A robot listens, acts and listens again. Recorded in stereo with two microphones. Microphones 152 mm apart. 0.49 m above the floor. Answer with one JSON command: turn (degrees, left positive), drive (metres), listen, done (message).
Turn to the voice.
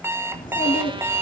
{"turn": 65}
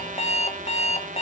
{"listen": true}
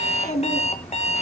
{"turn": 50}
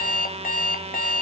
{"listen": true}
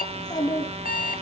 {"turn": 25}
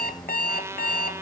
{"listen": true}
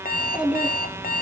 {"done": "Found it: a child speaking, straight ahead, 2 to 4 m away."}